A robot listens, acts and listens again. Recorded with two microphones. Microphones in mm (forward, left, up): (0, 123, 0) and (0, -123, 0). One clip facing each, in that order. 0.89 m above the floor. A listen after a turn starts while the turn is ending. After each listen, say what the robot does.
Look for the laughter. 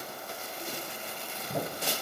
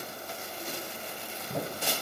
Keep listening.
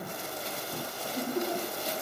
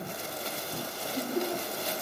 Turn 30° left.
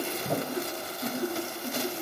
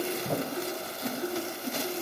Turn 150° left.
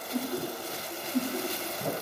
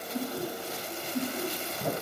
Turn 40° left.
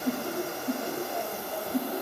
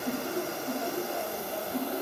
Facing the laughter.